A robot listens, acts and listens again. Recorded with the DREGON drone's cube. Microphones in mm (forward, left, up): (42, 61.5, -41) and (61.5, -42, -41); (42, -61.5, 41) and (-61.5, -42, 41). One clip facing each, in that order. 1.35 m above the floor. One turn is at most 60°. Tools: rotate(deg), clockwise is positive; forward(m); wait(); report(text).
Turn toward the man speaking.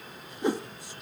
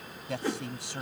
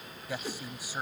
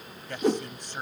rotate(60)
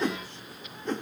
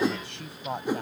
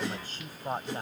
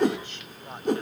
rotate(60)
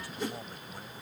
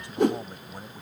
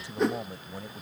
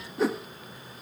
rotate(10)
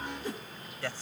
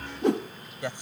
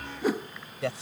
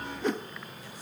report("Facing the man speaking.")